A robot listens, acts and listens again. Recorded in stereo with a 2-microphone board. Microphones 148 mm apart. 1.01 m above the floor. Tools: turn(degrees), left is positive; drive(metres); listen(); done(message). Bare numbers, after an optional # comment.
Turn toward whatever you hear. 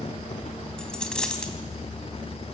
turn(30)
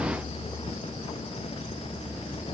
listen()
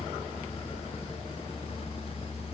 done("I heard a dropped coin, but can't make it out now. It was about 25° right or 145° left.")